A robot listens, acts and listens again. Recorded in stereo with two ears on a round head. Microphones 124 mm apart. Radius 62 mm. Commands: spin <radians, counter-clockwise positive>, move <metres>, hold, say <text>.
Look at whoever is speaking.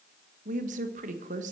spin -1.05
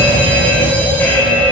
hold
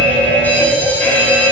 hold
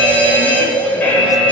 say I heard a woman speaking, but can't make it out now. It was about straight ahead or 60° right.